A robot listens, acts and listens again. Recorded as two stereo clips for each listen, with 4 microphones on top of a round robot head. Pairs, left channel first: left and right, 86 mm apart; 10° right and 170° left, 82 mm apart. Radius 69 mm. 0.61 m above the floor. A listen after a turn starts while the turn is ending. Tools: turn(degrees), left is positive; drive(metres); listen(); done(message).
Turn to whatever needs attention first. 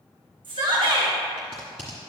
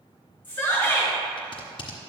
turn(degrees=-75)
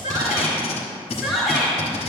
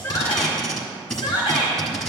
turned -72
done("Facing the shout.")